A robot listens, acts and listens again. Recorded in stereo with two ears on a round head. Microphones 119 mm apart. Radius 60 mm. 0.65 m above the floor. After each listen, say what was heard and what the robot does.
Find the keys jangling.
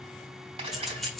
Turn 30° left.
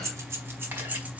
Turn 30° right.
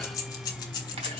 So it is at 35° left. Turn 35° left.
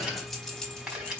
Facing the keys jangling.